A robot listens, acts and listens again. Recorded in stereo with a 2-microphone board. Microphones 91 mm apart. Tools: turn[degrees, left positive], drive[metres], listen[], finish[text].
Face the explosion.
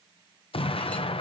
Action: turn[90]
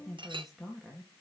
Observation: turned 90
Action: finish[I heard an explosion from this way, but can't make it out now.]